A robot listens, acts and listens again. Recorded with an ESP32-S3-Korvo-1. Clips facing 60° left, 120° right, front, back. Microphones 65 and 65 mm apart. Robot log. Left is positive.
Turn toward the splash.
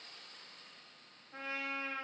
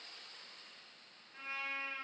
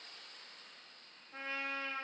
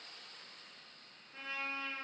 cmd idle
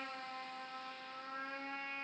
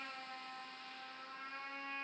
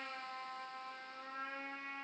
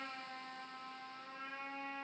cmd idle
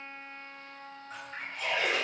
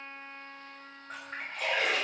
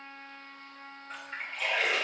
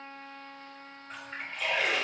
note: The splash: 90° right.
cmd yaw -90
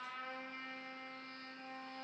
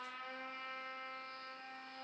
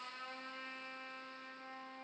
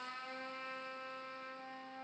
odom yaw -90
end: Facing where the splash came from. I can't hear it now.